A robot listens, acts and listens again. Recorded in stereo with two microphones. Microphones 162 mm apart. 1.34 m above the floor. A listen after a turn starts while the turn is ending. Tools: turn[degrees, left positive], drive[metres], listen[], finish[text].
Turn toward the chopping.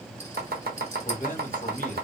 Action: turn[-90]
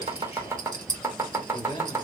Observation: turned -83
Thought: So it is at 15° right.
Action: turn[-15]
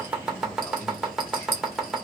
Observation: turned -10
Action: finish[Found it: chopping, straight ahead.]